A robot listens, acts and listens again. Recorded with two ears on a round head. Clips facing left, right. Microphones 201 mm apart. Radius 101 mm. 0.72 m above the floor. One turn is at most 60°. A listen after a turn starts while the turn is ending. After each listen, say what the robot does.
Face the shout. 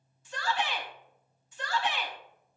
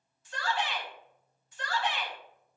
Turn 60° left.
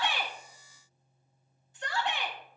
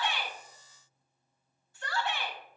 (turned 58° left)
Turn 15° left.
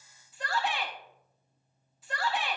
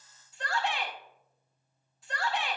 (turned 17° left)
Found it: a shout, straight ahead, 2 to 4 m away.